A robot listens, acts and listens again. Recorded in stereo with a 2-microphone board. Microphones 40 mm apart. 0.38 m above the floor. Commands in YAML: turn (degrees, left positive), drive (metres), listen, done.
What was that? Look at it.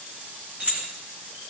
turn: -40
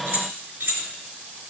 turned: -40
turn: -110
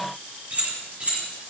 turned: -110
turn: -35
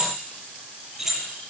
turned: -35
done: "Found it: keys jangling, straight ahead, over 4 m away."